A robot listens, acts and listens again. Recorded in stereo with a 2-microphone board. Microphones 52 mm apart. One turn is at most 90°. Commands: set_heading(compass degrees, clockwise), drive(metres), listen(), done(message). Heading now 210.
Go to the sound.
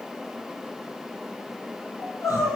set_heading(120)
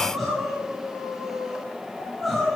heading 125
drive(1.0)
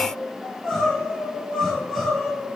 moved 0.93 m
drive(1.0)
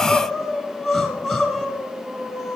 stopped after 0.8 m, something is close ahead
done("Arrived at the crying, straight ahead.")